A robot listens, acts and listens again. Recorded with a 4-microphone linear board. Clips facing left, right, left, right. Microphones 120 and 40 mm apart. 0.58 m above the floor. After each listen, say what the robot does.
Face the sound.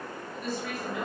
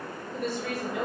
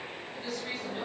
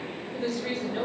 Turn 65° right.
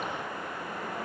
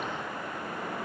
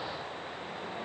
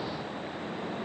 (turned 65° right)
Keep listening.
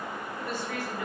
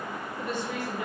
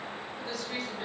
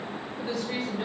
Turn 25° right.
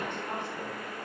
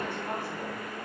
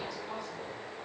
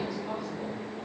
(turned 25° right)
Keep listening.
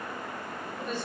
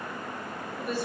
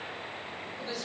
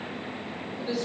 Turn 10° right.
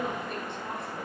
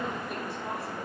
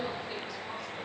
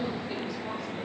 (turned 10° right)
Keep listening.
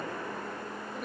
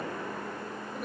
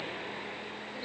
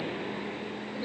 Keep listening.
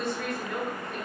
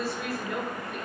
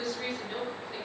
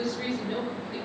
Found it: a woman speaking, straight ahead, 1 to 2 m away.